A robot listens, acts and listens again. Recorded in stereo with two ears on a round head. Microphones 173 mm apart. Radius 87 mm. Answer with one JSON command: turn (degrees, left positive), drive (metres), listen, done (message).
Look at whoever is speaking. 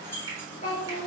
{"turn": 35}
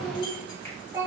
{"turn": -20}
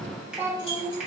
{"turn": -20}
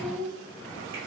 {"turn": -15}
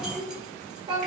{"turn": -25}
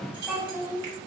{"done": "Facing the child speaking, 2 to 4 m away."}